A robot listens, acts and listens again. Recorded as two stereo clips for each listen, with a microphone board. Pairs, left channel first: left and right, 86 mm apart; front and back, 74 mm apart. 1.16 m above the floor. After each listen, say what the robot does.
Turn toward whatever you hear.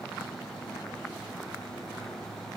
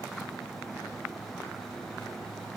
Keep listening.
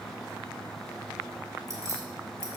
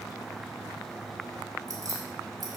Turn 145° right.
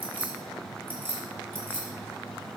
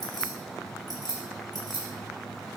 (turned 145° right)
Turn 25° right.
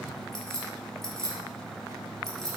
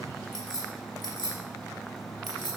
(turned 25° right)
Found it: keys jangling, straight ahead, 2 to 4 m away.